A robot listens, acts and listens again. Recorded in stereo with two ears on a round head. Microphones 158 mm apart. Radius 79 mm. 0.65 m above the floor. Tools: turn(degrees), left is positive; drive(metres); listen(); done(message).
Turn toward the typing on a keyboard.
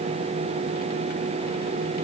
listen()
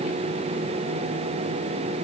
listen()
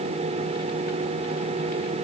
done("I can't make out typing on a keyboard.")